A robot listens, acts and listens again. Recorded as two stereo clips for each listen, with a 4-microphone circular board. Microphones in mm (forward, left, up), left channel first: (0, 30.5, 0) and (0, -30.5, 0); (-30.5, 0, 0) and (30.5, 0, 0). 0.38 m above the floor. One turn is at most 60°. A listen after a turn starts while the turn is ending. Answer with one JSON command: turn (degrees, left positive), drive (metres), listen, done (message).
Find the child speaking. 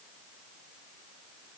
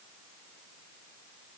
{"listen": true}
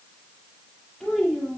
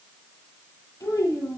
{"turn": 60}
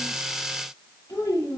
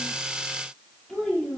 {"turn": 60}
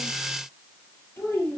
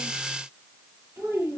{"turn": 40}
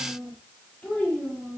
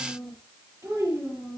{"turn": 25}
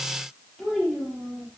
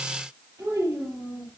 {"done": "Found it: a child speaking, straight ahead."}